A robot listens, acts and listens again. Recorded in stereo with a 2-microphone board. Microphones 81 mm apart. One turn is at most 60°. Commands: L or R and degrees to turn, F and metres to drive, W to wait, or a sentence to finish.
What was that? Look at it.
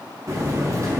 R40
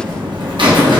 R60
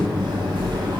R60
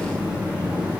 R15
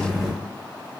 Facing the buzzer.